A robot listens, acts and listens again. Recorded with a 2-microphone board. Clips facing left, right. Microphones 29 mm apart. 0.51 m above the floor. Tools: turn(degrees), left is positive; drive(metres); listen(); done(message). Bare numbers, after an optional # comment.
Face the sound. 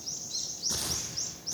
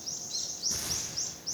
turn(90)
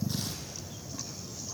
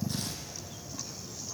listen()
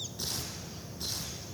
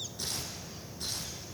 done("Facing the tearing paper.")